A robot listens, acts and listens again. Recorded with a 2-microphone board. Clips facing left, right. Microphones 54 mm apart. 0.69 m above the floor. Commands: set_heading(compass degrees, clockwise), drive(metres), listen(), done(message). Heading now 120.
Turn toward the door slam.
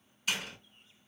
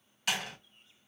set_heading(190)
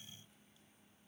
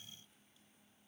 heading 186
listen()
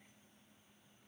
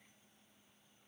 done("I heard a door slam, but can't make it out now. It was about 5° right or 45° right.")